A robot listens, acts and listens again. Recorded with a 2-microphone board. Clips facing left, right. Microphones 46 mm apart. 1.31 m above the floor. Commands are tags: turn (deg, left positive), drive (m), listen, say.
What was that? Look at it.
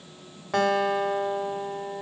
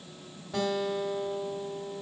<turn deg="70"/>
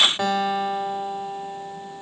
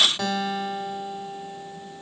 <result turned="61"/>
<turn deg="25"/>
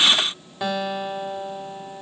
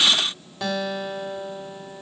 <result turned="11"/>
<turn deg="15"/>
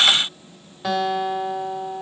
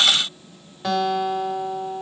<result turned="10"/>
<say>Facing the guitar, 1 to 2 m away.</say>